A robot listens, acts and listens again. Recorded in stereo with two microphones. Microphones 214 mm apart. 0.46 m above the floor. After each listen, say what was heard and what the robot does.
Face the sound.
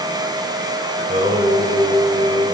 The singing: about 35° right or 145° right. Turn 35° right.
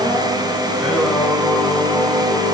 Facing the singing, 1 to 2 m away.